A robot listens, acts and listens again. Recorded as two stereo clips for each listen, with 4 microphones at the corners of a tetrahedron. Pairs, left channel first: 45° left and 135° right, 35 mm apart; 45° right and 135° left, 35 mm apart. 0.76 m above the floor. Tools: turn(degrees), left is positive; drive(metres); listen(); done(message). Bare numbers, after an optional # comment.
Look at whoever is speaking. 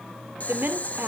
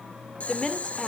# The woman speaking: 120° right.
turn(-120)
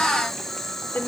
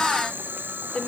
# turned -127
# The woman speaking is now 10° left.
turn(10)
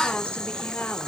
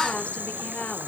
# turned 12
listen()
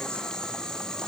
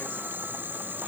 listen()
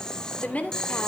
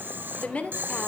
done("Facing the woman speaking.")